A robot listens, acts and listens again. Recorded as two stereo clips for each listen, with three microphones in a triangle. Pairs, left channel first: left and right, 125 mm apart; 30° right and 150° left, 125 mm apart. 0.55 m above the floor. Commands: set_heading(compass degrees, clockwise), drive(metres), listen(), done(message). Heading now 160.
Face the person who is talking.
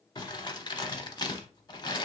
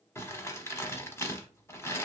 listen()
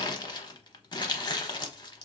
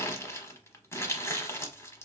listen()
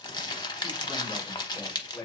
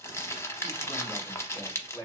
set_heading(145)
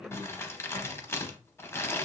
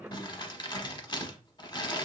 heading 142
listen()
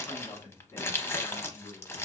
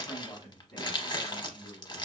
set_heading(122)
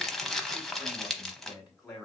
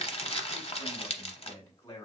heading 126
done("Found it: a man speaking, straight ahead.")